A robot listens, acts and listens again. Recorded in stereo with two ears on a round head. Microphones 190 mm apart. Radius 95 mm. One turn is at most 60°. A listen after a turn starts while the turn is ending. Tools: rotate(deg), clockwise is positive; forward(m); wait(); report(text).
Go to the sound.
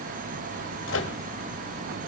rotate(-60)
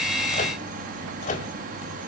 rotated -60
rotate(-40)
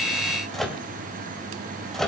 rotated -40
forward(1.0)
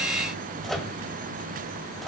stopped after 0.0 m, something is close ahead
report("Something is in my way. I am facing the microwave but have not reached it.")